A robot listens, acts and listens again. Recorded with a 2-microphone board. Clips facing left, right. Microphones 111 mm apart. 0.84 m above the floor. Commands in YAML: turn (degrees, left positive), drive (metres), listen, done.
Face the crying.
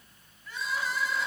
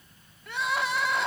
turn: -70
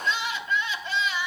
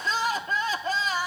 turn: -40
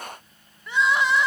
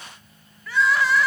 turn: 20
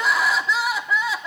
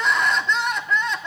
done: "Found it: crying, straight ahead, under 1 m away."